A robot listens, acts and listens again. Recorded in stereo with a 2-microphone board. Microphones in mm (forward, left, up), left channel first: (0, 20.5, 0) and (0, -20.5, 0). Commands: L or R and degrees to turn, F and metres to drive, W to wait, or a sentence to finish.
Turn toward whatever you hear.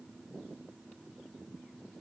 W
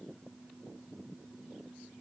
W
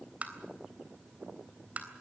R35
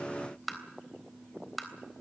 Facing the tapping.